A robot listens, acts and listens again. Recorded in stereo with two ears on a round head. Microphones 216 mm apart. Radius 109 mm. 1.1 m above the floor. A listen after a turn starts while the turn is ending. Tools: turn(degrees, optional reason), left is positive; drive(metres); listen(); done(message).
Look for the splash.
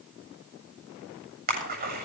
turn(degrees=-40, reason="The splash: about 40° right or 140° right.")
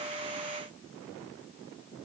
listen()
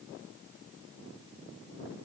done("I heard a splash, but can't make it out now. It was about straight ahead or 100° right.")